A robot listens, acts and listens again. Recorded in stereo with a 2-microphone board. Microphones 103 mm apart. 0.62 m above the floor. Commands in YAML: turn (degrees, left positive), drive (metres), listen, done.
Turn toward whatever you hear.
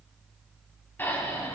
turn: 20
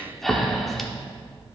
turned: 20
done: "Found it: breathing, straight ahead."